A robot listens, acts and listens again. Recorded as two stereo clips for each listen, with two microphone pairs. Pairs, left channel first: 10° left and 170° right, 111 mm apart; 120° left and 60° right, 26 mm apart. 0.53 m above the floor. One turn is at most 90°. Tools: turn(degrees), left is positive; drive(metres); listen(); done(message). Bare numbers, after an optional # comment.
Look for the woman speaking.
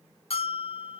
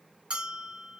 listen()
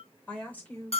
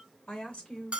# The woman speaking: 80° left.
turn(80)
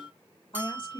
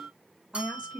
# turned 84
# The woman speaking is now 25° right.
turn(-25)
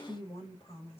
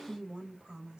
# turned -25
done("Facing the woman speaking, 2 to 4 m away.")